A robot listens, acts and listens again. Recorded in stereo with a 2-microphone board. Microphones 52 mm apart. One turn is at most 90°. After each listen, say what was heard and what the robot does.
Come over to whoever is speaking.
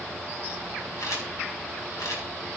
Keep listening.
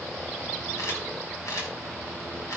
Keep listening.
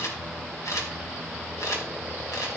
I can't make out anyone speaking to turn to.